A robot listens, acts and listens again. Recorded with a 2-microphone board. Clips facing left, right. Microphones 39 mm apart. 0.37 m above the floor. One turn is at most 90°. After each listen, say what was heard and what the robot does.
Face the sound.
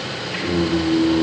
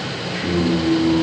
The singing: about 30° left or 150° left. Turn 30° left.
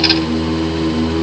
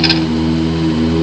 The singing: about 45° left or 135° left. Turn 45° left.
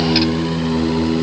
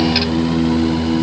So it is at 120° left. Turn 90° left.
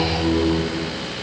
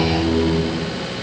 The singing is now 35° left. Turn 35° left.
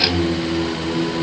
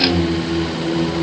The singing is now 20° left. Turn 20° left.
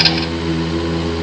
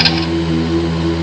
Facing the singing, 1 to 2 m away.